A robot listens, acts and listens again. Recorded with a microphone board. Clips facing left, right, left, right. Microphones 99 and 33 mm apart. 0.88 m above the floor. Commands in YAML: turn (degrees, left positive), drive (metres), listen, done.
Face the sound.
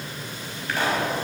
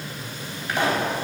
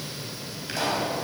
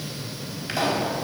turn: -15
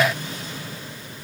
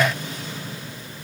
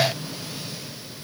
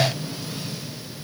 listen: true
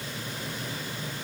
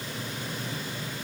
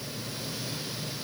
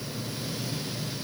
done: "I heard a pop, but can't make it out now. It was about straight ahead or 150° right."